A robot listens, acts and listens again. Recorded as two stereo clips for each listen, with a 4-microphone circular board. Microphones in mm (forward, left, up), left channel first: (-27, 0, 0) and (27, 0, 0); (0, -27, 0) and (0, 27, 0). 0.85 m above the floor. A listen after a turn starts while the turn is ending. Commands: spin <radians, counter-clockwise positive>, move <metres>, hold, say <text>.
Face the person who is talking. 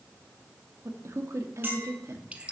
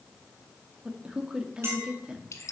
spin 0.26
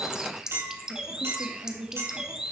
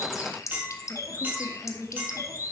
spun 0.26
say Found it: a man speaking, straight ahead.